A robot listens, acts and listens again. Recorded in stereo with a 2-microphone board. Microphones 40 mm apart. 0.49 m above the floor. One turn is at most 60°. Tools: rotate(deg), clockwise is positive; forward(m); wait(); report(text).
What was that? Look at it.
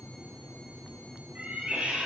rotate(25)
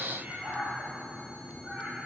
rotate(35)
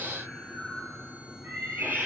rotate(60)
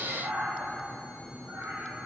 rotate(60)
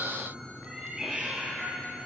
rotate(15)
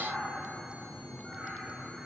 report("Facing the cat meowing, over 4 m away.")